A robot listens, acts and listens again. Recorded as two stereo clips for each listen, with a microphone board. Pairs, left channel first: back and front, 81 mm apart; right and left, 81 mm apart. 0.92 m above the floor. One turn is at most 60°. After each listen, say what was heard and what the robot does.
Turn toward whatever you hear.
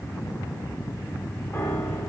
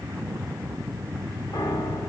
The piano: 120° right. Turn 60° right.
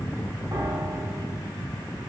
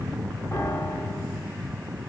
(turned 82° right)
The piano is now 40° right. Turn 40° right.
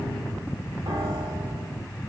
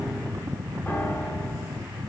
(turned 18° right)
The piano is now 20° right. Turn 20° right.
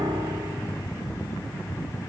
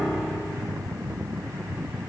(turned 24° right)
Facing the piano, 2 to 4 m away.